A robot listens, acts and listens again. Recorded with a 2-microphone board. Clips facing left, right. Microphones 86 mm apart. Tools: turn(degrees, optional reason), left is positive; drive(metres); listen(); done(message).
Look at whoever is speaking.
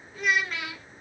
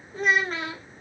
turn(degrees=-35, reason="The child speaking: about 35° right or 145° right.")
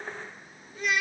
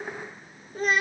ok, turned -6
turn(degrees=-40, reason="The child speaking: about 40° right or 140° right.")
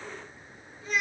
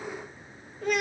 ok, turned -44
turn(degrees=-90, reason="So it is at 90° right.")
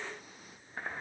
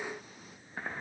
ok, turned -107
turn(degrees=15, reason="Nothing new. It was at 15° left.")
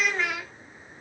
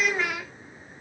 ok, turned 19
done("Facing the child speaking, under 1 m away.")